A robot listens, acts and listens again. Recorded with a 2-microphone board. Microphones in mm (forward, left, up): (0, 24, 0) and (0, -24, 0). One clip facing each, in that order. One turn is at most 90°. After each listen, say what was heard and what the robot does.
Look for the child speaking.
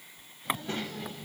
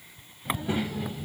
Turn 30° left.
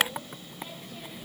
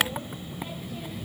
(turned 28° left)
Turn 30° left.
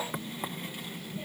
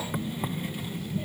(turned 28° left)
Turn 30° left.
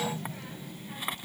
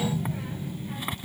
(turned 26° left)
Turn 30° right.
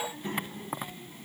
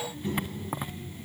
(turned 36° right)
So it is at 40° left. Turn 40° left.
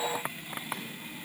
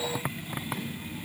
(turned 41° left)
Facing the child speaking, 2 to 4 m away.